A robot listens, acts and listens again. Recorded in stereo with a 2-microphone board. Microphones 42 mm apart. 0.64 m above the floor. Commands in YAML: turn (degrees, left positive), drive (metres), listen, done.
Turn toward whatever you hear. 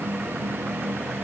listen: true
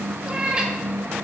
turn: -20
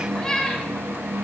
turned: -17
turn: 15
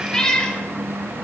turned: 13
turn: 20
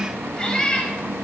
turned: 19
turn: 20
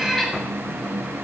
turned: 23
done: "Facing the cat meowing."